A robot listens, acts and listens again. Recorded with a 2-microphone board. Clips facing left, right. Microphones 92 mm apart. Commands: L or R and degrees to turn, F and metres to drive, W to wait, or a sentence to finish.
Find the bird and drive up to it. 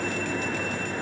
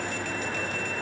W
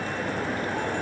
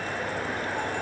W
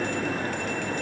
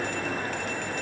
I can't make out a bird.